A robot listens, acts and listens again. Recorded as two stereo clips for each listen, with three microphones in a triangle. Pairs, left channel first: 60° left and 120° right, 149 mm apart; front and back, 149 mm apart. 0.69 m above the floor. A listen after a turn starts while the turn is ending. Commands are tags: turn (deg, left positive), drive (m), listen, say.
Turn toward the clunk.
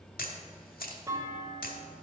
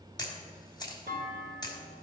<turn deg="170"/>
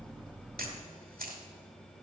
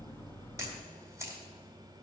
<say>Facing where the clunk came from. I can't hear it now.</say>